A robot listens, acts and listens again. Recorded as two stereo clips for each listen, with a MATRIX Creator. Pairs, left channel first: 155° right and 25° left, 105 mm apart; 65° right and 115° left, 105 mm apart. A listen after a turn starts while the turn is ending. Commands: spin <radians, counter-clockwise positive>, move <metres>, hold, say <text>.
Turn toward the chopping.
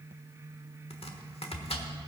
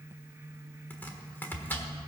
spin -2.44
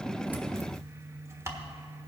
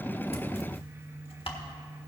spin -0.70
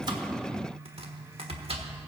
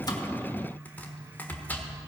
say Facing the chopping.